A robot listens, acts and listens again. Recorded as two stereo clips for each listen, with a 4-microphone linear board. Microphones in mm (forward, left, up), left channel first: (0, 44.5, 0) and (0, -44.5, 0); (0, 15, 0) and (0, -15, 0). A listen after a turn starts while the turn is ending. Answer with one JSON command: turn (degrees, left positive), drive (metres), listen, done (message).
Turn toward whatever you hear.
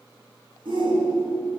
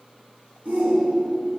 {"turn": -75}
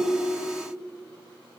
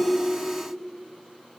{"listen": true}
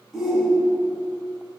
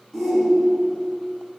{"done": "Facing the shout."}